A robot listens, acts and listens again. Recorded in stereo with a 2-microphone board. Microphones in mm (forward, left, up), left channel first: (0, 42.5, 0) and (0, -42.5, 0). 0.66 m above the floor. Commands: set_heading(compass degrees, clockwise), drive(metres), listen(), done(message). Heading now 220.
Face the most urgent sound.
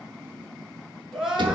set_heading(250)
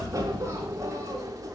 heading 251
listen()
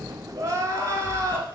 set_heading(36)
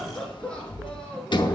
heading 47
set_heading(37)
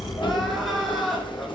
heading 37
done("Found it: crying, straight ahead, 2 to 4 m away.")